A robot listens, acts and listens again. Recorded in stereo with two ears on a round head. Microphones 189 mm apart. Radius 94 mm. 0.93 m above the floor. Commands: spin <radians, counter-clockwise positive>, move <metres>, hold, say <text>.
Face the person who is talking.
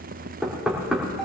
hold
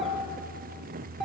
hold
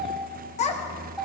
spin 0.52
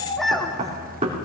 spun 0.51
say Found it: a child speaking, straight ahead, 1 to 2 m away.